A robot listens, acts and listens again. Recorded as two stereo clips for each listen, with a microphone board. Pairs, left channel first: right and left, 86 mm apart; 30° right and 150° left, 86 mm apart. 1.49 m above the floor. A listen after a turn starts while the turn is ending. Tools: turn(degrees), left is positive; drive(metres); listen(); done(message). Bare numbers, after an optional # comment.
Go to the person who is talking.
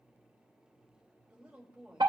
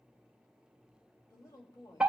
# The woman speaking: 10° left.
turn(10)
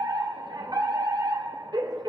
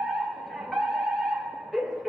listen()
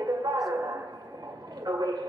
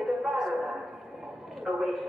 listen()
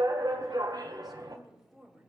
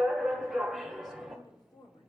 drive(1.0)
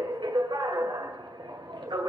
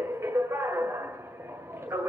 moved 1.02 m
listen()
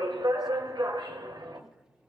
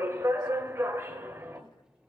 listen()
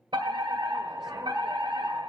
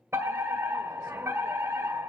done("I heard a woman speaking from this way, but can't make it out now. I did not reach it.")